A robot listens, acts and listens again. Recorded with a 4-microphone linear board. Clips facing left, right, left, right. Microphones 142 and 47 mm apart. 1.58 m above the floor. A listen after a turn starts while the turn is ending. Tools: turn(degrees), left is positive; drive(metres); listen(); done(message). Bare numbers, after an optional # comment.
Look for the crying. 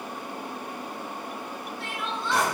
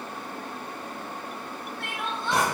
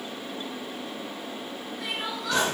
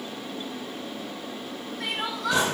# The crying: about 55° right or 125° right.
turn(-55)
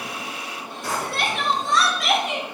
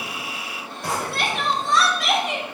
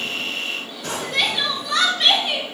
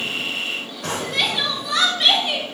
done("Found it: crying, straight ahead.")